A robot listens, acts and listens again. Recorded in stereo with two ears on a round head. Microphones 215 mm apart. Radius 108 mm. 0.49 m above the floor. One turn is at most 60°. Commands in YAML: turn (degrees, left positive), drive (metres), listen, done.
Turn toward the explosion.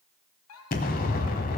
turn: 35
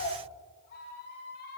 listen: true
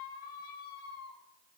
done: "I heard an explosion, but can't make it out now. It was about straight ahead or 110° left."